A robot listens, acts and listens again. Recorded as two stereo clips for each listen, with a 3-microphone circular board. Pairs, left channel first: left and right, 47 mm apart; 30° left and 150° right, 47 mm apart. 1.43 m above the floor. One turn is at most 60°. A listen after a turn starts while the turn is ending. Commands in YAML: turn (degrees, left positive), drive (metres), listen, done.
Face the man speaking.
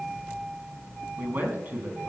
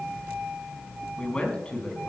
turn: -40
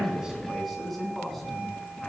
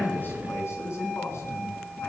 done: "Found it: a man speaking, straight ahead, over 4 m away."